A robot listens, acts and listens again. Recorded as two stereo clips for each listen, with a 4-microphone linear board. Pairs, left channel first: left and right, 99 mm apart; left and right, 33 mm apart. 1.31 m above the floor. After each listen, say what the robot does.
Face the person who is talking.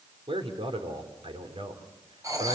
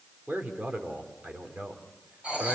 Turn 70° right.
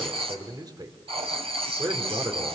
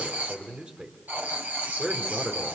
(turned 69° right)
Turn 45° right.
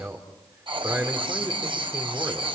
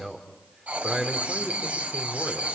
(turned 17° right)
Turn 25° right.
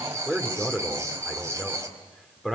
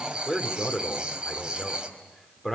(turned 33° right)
Facing the man speaking, 2 to 4 m away.